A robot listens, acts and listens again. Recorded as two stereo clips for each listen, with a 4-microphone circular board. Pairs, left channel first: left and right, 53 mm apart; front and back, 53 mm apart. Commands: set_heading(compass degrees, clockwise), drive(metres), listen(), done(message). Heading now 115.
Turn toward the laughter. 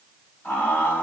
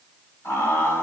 set_heading(80)
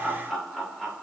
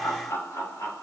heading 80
set_heading(90)
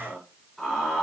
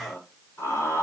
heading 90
done("Found it: laughter, straight ahead, over 4 m away.")